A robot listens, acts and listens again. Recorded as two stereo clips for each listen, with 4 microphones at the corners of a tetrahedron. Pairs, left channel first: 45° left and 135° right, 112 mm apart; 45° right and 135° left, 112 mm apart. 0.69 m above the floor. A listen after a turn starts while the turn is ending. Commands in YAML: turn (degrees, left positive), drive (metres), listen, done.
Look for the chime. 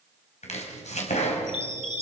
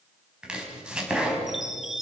turn: -140
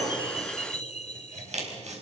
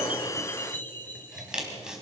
turn: 25
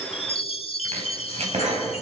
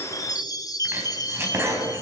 turn: 10
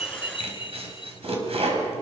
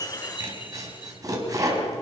done: "Found it: a chime, straight ahead."